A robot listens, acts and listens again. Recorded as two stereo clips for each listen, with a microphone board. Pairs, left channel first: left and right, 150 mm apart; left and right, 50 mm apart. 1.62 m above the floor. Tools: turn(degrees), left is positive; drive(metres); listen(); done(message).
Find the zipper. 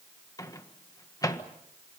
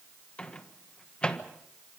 listen()
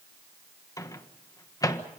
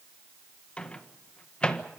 listen()
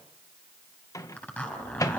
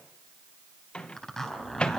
turn(degrees=30)
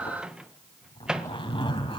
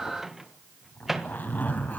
turn(degrees=140)
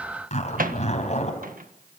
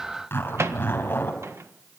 turn(degrees=55)
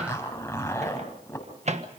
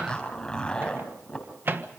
turn(degrees=20)
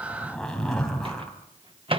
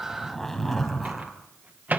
done("Found it: a zipper, straight ahead.")